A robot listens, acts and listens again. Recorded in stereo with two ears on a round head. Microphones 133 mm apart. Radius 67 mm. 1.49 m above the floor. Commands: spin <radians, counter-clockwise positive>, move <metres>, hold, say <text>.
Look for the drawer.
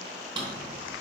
spin -0.52
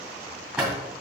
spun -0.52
say Facing the drawer.